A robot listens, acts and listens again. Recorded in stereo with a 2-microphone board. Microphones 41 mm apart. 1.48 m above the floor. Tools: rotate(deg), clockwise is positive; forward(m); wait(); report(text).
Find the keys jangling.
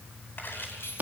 rotate(-75)
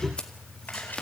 wait()
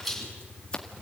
report("Found it: keys jangling, straight ahead.")